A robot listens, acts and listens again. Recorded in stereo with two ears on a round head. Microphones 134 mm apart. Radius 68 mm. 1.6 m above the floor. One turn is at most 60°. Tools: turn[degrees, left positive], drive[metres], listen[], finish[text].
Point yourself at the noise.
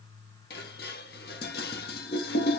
Thought: The dishes clattering: about 75° left or 105° left.
Action: turn[60]
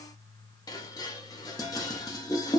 Thought: So it is at 25° left.
Action: turn[25]
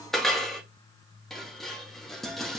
Action: finish[Facing the dishes clattering, 1 to 2 m away.]